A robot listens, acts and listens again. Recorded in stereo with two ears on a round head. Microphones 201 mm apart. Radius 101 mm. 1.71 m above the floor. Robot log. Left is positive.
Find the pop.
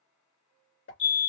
note: The pop: about 60° left or 120° left.
cmd yaw +60
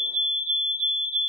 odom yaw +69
cmd idle
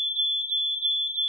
end: I heard a pop, but can't make it out now. It was about 10° right or 50° left.